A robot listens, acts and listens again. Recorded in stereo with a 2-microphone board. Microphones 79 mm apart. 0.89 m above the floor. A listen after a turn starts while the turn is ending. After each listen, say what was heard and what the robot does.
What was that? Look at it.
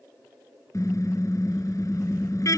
The car horn: about 45° left or 135° left. Turn 45° left.
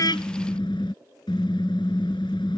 So it is at 90° left. Turn 90° left.
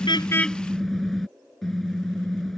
Facing the car horn.